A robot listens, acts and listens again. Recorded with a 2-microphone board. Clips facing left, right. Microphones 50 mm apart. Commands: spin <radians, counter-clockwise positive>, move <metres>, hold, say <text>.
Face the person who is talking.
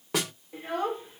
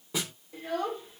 spin 0.44
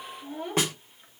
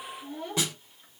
spin 0.35
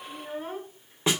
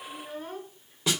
spin 0.35
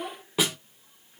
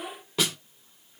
spin 0.26
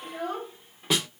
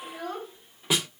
spin 0.35
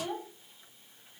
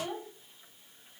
say Found it: a child speaking, straight ahead.